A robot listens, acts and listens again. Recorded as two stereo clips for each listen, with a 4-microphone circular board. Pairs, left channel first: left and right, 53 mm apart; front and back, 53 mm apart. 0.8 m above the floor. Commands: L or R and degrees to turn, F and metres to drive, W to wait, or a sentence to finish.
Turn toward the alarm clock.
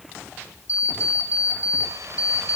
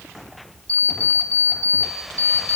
L60
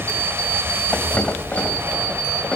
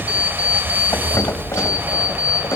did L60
W
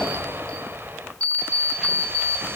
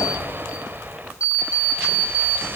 L25
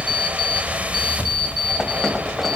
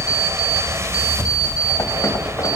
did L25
W
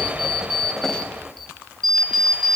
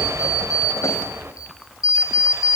Facing the alarm clock.